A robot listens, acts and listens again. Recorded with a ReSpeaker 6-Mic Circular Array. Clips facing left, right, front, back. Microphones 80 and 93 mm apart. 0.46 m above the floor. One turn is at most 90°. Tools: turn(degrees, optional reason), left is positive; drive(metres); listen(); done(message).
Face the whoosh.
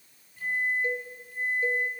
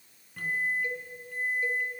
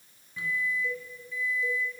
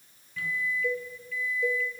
listen()
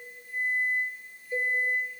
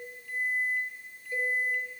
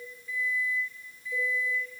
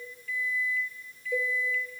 listen()
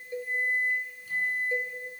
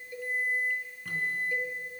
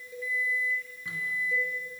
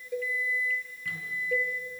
done("I can't make out a whoosh, only a microwave and a cowbell.")